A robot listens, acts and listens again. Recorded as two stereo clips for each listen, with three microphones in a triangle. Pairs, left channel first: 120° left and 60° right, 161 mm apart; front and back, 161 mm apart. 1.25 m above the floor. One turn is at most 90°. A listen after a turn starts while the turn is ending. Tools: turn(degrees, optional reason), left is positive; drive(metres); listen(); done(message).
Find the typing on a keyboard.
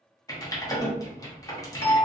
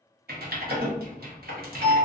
turn(degrees=-90, reason="The typing on a keyboard: 170° right.")
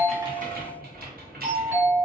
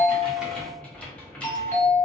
turn(degrees=-80, reason="The typing on a keyboard is now 80° right.")
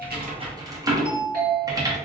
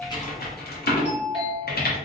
done("Facing the typing on a keyboard, under 1 m away.")